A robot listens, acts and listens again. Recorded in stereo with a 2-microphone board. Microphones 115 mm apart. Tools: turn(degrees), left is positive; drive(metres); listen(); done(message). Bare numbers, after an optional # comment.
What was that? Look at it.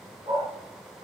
turn(-90)
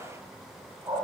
# So it is at 40° right.
turn(-40)
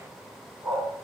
# The dog barking is now 15° right.
turn(-15)
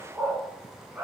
# The dog barking is now 15° right.
turn(-15)
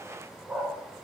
done("Facing the dog barking.")